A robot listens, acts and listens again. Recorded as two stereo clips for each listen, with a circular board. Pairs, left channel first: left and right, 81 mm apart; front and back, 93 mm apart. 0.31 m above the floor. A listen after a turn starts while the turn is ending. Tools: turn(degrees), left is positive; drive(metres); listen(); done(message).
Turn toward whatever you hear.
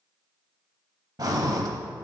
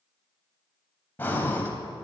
turn(degrees=-65)
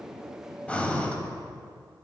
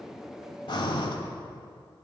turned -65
turn(degrees=20)
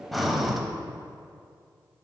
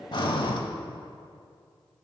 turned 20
done("Facing the breathing, under 1 m away.")